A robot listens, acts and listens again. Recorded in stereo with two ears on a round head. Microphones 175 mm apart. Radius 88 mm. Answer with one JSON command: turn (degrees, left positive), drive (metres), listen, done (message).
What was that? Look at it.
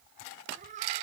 {"turn": -40}
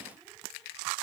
{"listen": true}
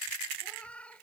{"done": "Found it: a cat meowing, straight ahead."}